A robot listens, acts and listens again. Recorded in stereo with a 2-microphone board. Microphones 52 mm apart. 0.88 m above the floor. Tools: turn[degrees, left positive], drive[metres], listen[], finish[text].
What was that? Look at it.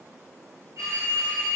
Thought: The phone ringing: about 70° right or 110° right.
Action: turn[-70]
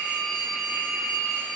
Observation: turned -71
Action: finish[Facing the phone ringing.]